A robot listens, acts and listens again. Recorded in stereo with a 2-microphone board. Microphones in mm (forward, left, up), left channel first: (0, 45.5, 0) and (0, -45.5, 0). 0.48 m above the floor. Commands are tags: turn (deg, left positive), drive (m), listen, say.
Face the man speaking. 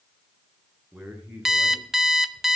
<turn deg="-15"/>
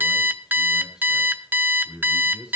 <turn deg="-30"/>
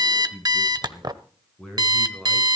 <say>Found it: a man speaking, straight ahead, over 4 m away.</say>